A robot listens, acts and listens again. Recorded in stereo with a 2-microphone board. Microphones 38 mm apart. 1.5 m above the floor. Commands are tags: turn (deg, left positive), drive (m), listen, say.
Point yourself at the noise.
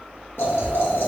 <turn deg="90"/>
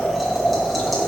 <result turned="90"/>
<say>Facing the boiling, 1 to 2 m away.</say>